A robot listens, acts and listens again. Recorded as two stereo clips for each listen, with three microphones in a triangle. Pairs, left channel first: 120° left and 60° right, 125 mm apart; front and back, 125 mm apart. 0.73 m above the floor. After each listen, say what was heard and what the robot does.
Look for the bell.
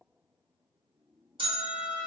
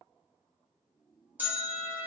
The bell: 105° right. Turn 105° right.
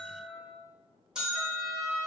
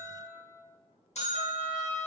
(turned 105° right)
The bell is now 25° left. Turn 25° left.
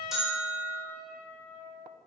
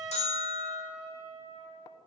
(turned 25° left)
The bell is now 25° left. Turn 25° left.
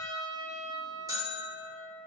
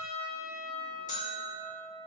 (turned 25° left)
Facing the bell, under 1 m away.